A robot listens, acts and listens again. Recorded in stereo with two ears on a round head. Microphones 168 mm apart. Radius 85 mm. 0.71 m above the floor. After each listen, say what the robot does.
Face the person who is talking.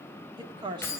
Turn 25° right.
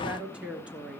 Facing the woman speaking.